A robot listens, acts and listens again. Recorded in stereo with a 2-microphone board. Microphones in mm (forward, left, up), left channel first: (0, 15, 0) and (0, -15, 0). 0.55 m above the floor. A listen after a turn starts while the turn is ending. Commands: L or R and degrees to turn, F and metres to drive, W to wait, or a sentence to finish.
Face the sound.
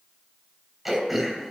R30
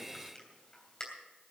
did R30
L25
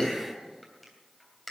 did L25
Facing the throat clearing, 2 to 4 m away.